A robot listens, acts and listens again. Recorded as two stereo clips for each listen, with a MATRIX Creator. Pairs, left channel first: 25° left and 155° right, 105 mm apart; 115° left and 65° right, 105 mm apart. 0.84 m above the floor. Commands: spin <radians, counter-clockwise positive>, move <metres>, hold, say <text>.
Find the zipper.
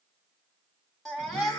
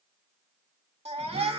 hold
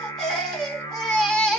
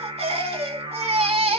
hold
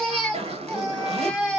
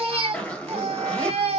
spin -2.97
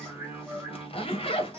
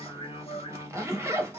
say Facing the zipper, 1 to 2 m away.